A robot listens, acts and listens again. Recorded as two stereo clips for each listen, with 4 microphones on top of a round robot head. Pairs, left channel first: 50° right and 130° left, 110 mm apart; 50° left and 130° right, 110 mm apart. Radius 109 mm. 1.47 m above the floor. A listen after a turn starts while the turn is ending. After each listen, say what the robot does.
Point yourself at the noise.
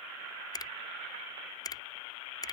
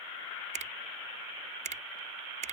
Turn 110° right.
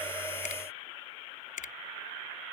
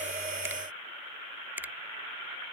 Turn 55° right.
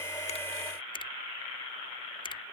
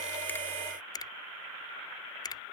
Found it: a finger snap, straight ahead.